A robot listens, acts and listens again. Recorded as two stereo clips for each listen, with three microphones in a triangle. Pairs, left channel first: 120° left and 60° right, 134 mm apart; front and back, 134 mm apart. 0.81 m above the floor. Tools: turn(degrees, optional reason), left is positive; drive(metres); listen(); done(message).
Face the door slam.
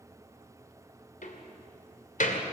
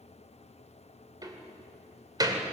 turn(degrees=120, reason="The door slam: 120° left.")
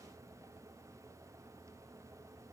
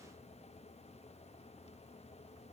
done("Facing where the door slam came from. I can't hear it now.")